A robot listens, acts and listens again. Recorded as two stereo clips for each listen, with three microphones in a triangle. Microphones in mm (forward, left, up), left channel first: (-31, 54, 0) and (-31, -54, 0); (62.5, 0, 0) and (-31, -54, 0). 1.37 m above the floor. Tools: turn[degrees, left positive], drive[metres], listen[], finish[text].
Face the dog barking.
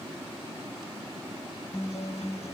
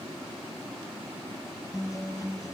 Action: listen[]
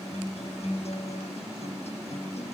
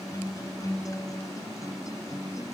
Action: listen[]
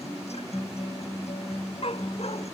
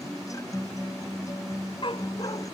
Thought: The dog barking: 65° left.
Action: turn[65]
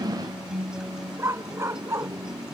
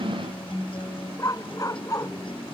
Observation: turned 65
Thought: The dog barking is now 25° right.
Action: turn[-25]
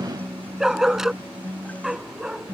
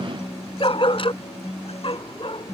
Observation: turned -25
Action: finish[Found it: a dog barking, straight ahead.]